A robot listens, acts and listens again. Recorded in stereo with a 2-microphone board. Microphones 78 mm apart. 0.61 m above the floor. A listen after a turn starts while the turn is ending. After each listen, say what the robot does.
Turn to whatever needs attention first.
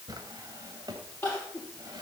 Turn 25° left.
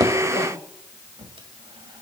Keep listening.
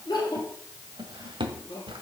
Turn 130° left.
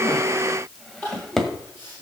Turn 25° left.
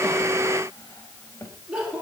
Turn 10° right.
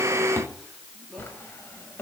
Keep listening.
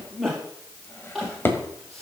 Facing the crying, over 4 m away.